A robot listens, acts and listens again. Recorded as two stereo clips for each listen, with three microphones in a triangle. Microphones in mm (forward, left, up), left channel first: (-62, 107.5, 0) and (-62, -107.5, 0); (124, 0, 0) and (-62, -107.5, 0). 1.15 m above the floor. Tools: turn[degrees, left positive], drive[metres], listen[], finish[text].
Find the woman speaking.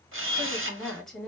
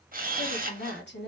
Action: finish[Facing the woman speaking, 1 to 2 m away.]